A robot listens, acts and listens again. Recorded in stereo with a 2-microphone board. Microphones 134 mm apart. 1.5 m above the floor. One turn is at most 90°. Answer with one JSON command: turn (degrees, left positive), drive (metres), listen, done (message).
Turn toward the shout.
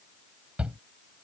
{"turn": -30}
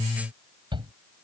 {"turn": -90}
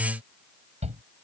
{"turn": -55}
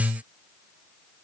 {"listen": true}
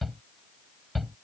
{"done": "Facing the shout."}